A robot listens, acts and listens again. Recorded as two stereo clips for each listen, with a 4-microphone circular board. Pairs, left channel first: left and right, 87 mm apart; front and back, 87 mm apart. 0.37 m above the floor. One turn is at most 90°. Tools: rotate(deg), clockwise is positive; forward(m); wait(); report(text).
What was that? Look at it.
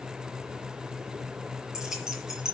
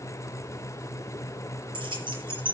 rotate(90)
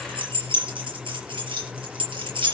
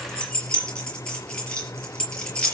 rotate(80)
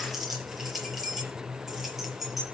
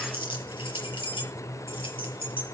report("Facing the keys jangling.")